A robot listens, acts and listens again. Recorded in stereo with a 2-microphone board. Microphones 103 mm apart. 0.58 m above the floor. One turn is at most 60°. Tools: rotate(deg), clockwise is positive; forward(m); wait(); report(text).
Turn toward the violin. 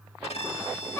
rotate(-60)
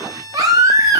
rotate(-40)
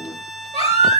report("Found it: a violin, straight ahead, 1 to 2 m away.")